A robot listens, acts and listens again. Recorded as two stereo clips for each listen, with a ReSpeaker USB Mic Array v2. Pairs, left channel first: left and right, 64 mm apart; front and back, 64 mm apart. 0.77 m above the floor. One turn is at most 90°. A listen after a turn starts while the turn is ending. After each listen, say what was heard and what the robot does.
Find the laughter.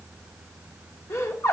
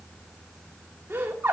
The laughter: 125° left. Turn 90° left.
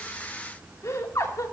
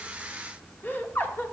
The laughter is now 55° left. Turn 55° left.
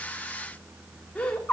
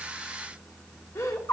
The laughter is now 20° left. Turn 20° left.
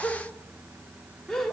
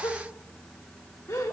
The laughter is now 10° left. Turn 10° left.
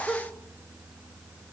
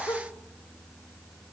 Keep listening.
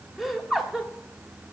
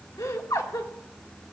Facing the laughter, 1 to 2 m away.